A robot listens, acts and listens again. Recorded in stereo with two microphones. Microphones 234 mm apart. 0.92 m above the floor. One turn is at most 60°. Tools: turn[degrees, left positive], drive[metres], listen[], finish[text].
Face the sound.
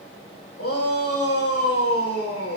Action: turn[60]
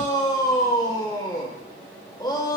Thought: So it is at 20° left.
Action: turn[20]
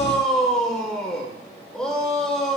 Action: finish[Found it: a shout, straight ahead, 2 to 4 m away.]